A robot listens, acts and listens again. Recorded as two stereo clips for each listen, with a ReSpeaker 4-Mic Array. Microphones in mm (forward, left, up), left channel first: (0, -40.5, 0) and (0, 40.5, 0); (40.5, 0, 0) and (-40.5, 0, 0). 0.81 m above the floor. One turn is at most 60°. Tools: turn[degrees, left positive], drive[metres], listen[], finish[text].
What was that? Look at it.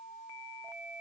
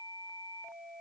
Action: listen[]
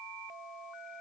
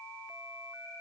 Action: listen[]
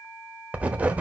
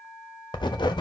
Thought: The writing: 20° left.
Action: turn[20]
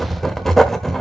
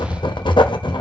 Action: finish[Found it: writing, straight ahead, 1 to 2 m away.]